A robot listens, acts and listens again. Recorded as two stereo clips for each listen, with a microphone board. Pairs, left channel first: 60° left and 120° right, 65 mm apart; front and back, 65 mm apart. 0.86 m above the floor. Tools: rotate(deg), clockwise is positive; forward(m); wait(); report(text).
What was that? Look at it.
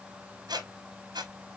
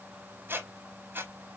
rotate(120)
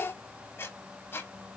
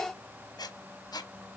report("Facing the squeak, under 1 m away.")